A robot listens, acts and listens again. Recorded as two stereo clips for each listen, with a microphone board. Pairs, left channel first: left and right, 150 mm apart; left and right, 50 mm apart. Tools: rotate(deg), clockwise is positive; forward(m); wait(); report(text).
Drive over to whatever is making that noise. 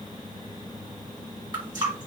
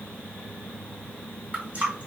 rotate(30)
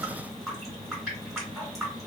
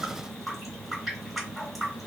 forward(1.0)
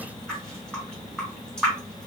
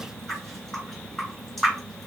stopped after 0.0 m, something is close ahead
report("Something is in my way. I am facing the running tap but have not reached it.")